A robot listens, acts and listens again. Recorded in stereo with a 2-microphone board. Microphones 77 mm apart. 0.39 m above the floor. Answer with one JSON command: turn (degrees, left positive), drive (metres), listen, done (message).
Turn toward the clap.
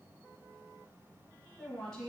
{"listen": true}
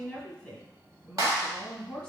{"turn": -45}
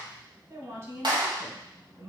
{"turn": -85}
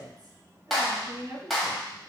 {"done": "Facing the clap, 1 to 2 m away."}